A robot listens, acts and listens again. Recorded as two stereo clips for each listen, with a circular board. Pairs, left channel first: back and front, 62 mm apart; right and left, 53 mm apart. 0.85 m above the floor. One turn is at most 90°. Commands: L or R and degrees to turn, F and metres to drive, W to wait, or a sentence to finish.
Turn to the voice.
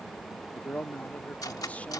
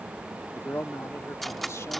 R90
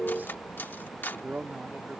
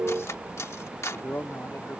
R55
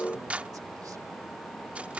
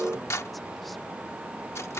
W
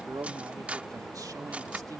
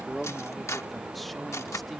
Facing the man speaking.